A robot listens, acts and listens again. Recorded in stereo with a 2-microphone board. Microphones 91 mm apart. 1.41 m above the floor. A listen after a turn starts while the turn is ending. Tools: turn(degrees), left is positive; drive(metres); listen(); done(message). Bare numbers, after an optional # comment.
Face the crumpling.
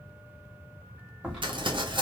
# The crumpling: about 60° right or 120° right.
turn(-60)
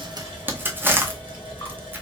# So it is at 25° right.
turn(-25)
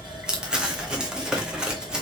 # The crumpling is now 10° right.
turn(-10)
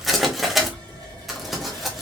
done("Found it: crumpling, straight ahead.")